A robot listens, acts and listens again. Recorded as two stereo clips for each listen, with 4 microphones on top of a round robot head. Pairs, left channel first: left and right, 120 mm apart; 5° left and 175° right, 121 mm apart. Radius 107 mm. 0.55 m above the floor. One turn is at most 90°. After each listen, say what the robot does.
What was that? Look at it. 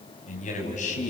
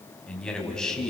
Turn 90° left.
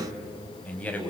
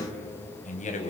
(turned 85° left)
Turn 15° left.
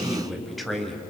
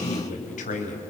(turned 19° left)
Facing the man speaking.